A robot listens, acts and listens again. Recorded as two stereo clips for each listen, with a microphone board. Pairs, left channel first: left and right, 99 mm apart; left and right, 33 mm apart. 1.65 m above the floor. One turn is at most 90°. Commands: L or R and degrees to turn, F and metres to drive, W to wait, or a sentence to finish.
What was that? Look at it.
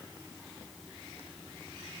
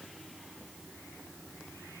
W
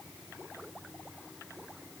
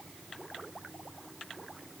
W
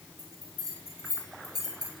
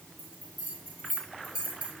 R45
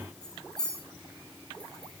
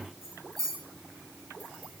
Facing the bell, over 4 m away.